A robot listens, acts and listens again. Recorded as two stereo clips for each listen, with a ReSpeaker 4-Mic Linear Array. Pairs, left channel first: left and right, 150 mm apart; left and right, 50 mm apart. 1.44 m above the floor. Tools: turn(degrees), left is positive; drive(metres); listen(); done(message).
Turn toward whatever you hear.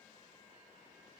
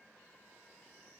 listen()
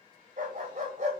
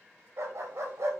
turn(degrees=-60)
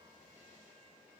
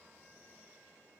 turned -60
listen()
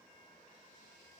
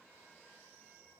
listen()
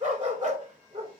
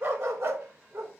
turn(degrees=-60)
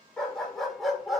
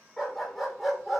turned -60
done("Facing the dog barking, 2 to 4 m away.")